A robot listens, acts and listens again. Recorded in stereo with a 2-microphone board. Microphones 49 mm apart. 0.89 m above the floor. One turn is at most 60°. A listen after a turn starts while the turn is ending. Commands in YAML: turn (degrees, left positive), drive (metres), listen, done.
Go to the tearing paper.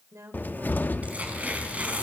turn: -30
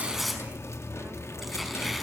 drive: 1.0
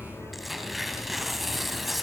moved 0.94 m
drive: 1.0
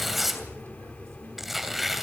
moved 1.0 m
drive: 1.0
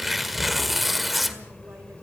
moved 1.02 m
drive: 1.0
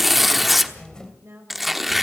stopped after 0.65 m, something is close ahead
done: "I am next to the tearing paper."